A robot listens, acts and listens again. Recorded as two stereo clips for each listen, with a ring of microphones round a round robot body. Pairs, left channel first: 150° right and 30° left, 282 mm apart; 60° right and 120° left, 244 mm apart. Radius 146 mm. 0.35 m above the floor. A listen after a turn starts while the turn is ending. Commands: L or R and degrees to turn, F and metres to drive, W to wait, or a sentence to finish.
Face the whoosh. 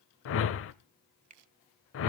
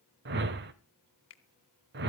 L170
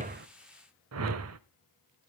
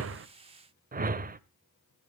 L65
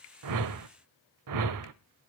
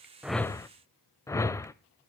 L20
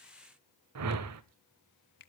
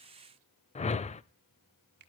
Facing the whoosh, under 1 m away.